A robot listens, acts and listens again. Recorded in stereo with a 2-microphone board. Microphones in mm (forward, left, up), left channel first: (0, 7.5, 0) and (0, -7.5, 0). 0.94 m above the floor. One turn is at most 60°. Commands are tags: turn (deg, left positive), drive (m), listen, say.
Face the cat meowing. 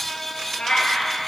<turn deg="55"/>
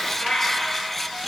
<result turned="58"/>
<turn deg="60"/>
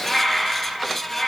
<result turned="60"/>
<turn deg="20"/>
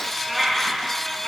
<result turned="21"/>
<turn deg="10"/>
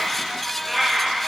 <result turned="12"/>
<say>Facing the cat meowing, 2 to 4 m away.</say>